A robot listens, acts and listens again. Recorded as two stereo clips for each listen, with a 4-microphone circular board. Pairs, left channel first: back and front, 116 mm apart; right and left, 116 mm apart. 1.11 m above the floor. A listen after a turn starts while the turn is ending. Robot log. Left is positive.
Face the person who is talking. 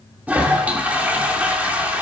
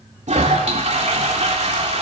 cmd idle
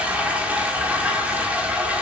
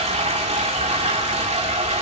cmd idle
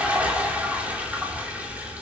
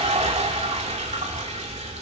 end: I can't make out anyone speaking, only a toilet flushing.